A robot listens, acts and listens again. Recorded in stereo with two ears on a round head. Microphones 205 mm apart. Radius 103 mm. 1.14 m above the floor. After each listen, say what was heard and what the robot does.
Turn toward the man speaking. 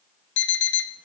Keep listening.
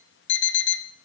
Keep listening.
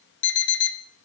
I can't make out a man speaking to turn to.